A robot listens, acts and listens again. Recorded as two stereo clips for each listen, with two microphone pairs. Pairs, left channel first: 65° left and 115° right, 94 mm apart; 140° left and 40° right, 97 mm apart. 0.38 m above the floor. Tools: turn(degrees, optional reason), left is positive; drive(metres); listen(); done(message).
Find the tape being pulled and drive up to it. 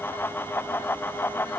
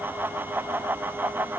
listen()
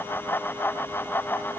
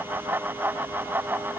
listen()
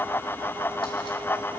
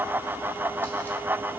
done("I can't make out tape being pulled.")